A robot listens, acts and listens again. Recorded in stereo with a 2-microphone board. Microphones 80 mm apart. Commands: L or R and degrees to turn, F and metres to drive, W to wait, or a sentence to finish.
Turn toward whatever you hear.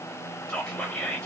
L30
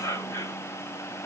L135
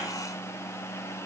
W
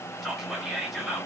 Found it: whispering, straight ahead.